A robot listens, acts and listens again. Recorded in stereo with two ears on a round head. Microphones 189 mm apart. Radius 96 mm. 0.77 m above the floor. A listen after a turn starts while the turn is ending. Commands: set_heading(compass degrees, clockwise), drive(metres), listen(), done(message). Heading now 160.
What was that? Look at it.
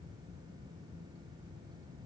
listen()
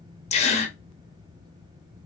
set_heading(130)
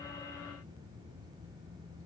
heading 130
listen()
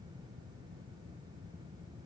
done("I heard a gasp, but can't make it out now. It was about straight ahead or 120° left.")